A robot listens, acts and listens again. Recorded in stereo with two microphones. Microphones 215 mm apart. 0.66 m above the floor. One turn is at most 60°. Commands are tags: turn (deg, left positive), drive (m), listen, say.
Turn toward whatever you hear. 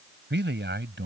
<turn deg="-60"/>
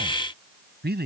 <turn deg="-50"/>
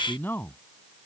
<turn deg="10"/>
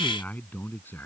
<turn deg="10"/>
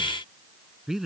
<say>Facing the man speaking.</say>